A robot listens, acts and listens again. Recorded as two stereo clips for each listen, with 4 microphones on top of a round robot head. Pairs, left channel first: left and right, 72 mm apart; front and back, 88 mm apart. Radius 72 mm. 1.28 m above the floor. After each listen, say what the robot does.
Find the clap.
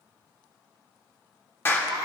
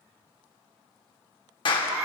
Turn 30° left.
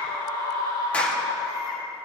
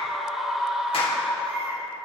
Keep listening.
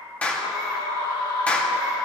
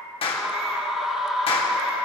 Turn 20° left.
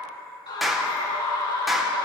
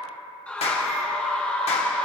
Found it: a clap, straight ahead.